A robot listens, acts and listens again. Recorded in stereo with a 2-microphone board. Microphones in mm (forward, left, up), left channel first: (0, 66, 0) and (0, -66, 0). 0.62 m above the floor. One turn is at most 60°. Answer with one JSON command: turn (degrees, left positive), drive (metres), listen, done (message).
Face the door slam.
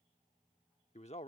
{"listen": true}
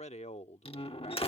{"turn": 45}
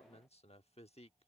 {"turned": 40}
{"listen": true}
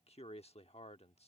{"done": "I heard a door slam, but can't make it out now. It was about 5° left or 95° left."}